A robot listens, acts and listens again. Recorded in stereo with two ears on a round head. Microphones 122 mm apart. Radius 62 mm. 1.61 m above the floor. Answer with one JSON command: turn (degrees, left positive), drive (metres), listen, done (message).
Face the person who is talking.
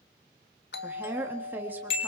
{"turn": -30}
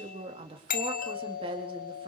{"turn": -140}
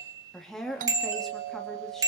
{"done": "Facing the woman speaking, 2 to 4 m away."}